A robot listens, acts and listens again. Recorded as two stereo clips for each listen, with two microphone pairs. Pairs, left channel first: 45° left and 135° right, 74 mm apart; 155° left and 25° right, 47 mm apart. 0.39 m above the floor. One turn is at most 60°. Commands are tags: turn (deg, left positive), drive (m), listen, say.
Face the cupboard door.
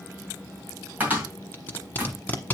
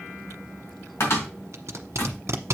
<turn deg="60"/>
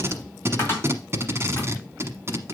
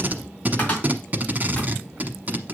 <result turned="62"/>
<turn deg="60"/>
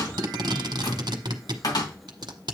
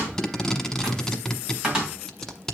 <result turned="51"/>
<turn deg="50"/>
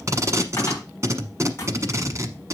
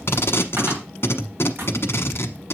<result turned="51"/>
<say>Found it: a cupboard door, straight ahead.</say>